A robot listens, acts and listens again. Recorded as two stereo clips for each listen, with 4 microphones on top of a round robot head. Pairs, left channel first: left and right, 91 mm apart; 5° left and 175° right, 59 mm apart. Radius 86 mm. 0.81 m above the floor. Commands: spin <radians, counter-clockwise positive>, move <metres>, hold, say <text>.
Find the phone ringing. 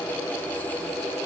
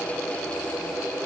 hold
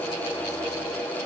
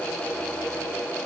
hold
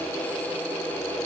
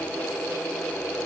say I can't make out a phone ringing to turn to.